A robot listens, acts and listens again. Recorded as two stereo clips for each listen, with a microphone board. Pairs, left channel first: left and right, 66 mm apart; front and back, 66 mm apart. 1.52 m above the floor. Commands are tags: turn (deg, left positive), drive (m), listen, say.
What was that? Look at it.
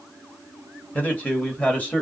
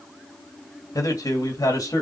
<turn deg="25"/>
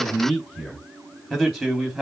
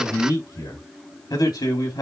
<say>Found it: a man speaking, straight ahead.</say>